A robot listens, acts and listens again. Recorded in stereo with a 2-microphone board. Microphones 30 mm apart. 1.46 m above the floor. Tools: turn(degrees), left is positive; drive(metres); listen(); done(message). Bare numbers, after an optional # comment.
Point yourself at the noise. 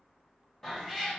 # The cat meowing: about 15° left or 165° left.
turn(15)
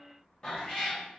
# So it is at 150° left.
turn(150)
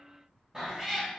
# The cat meowing is now 25° right.
turn(-25)
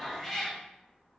done("Found it: a cat meowing, straight ahead.")